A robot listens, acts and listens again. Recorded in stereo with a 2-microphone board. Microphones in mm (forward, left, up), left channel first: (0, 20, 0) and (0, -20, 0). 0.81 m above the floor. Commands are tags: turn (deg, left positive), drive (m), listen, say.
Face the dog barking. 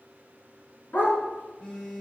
<turn deg="60"/>
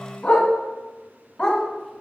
<turn deg="20"/>
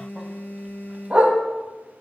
<turn deg="-45"/>
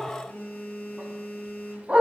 <turn deg="-30"/>
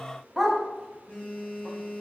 <say>Found it: a dog barking, straight ahead, 1 to 2 m away.</say>